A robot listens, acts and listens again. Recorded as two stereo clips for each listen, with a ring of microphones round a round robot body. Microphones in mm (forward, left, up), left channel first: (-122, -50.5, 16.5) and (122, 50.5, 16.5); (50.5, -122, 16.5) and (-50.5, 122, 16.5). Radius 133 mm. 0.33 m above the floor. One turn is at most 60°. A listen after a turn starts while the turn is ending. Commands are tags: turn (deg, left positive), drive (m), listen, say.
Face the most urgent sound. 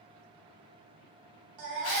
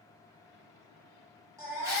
<turn deg="35"/>
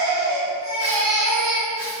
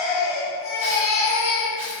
<turn deg="-15"/>
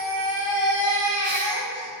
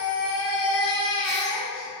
<say>Facing the baby crying.</say>